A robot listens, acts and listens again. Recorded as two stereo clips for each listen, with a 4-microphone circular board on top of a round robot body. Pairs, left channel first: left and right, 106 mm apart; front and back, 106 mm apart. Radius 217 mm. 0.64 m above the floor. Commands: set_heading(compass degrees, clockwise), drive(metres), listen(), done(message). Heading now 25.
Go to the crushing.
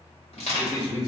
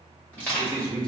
set_heading(310)
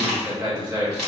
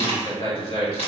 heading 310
drive(1.0)
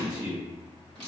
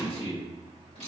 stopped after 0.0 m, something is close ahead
set_heading(300)
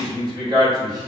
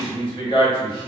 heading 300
listen()
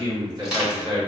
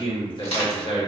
done("Something is in my way. I am facing the crushing but have not reached it.")